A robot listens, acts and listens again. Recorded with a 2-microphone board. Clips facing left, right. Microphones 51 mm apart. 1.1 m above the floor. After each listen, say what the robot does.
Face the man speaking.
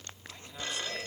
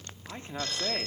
Turn 35° right.
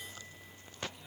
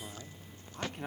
Turn 120° right.
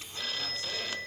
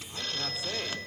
Keep listening.
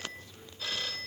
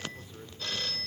Keep listening.
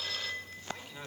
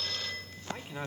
Turn 25° right.
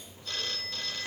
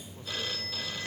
Keep listening.
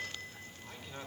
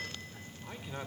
Turn 15° right.
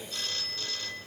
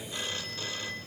Keep listening.
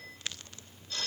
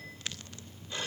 Keep listening.
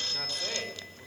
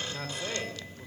Found it: a man speaking, straight ahead.